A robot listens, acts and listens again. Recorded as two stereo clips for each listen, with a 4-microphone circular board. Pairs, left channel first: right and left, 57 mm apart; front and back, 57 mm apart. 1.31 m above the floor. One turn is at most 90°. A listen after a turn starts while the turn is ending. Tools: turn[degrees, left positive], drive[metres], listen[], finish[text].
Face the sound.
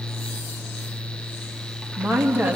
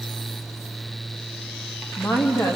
Thought: The woman speaking: 30° left.
Action: turn[30]
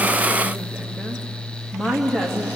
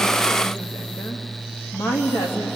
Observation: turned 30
Action: finish[Facing the woman speaking, 2 to 4 m away.]